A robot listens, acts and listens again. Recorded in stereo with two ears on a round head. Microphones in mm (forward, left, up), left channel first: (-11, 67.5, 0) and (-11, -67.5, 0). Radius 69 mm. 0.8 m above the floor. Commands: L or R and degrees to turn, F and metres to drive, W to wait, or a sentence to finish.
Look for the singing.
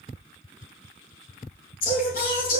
L65
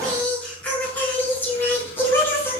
L15
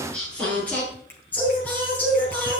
L10
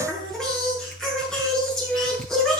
Found it: singing, straight ahead.